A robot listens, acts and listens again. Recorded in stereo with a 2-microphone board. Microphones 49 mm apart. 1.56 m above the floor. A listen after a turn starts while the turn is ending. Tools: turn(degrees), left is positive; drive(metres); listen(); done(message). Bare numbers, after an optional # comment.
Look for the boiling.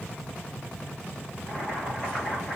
turn(30)
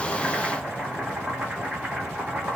# So it is at 15° right.
turn(-15)
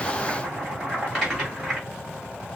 done("Facing the boiling.")